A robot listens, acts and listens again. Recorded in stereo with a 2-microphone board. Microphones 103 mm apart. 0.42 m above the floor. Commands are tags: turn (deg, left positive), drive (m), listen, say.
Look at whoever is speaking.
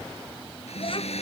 <turn deg="60"/>
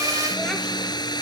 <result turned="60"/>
<listen/>
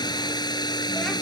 <listen/>
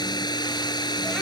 <say>I heard a child speaking, but can't make it out now. It was about straight ahead or 60° left.</say>